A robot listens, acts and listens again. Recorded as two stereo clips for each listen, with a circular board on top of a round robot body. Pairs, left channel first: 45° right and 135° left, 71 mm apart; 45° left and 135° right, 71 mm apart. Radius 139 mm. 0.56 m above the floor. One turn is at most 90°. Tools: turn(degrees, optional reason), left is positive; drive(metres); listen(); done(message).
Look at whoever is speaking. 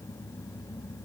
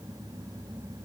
listen()
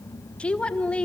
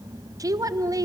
turn(degrees=-90, reason="The woman speaking: 115° right.")
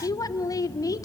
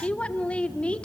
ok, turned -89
turn(degrees=-25, reason="The woman speaking is now 25° right.")
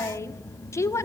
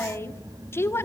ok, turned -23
done("Found it: a woman speaking, straight ahead, 1 to 2 m away.")